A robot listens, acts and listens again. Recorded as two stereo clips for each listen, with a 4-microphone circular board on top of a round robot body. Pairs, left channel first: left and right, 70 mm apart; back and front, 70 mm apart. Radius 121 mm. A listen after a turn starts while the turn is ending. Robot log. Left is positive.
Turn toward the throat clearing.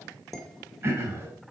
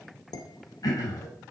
note: The throat clearing: 145° right.
cmd yaw -145
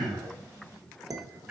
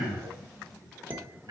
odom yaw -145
note: The throat clearing is now 20° right.
cmd yaw -20
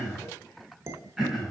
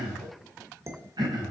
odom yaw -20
end: Facing the throat clearing, over 4 m away.